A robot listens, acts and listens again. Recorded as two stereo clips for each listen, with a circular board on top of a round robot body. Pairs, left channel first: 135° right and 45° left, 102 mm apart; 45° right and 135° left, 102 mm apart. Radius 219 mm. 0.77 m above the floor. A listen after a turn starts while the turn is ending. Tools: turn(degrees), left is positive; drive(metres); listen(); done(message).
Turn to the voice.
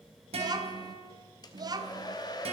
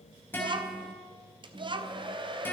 turn(degrees=95)
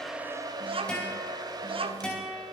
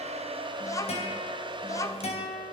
turn(degrees=15)
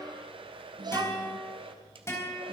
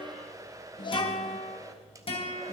done("Facing the child speaking.")